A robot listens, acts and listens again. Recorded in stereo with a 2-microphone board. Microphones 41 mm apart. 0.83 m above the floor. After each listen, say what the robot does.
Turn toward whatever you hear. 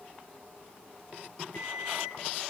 Turn 65° left.
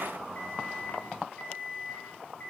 Turn 45° left.
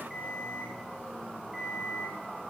Found it: an alarm clock, straight ahead, over 4 m away.